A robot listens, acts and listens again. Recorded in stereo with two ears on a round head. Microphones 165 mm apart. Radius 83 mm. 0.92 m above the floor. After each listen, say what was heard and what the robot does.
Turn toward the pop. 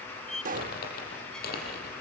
The pop: about 45° right or 135° right. Turn 45° right.
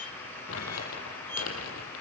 Keep listening.
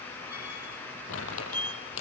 I heard a pop, but can't make it out now. It was about straight ahead or 90° right.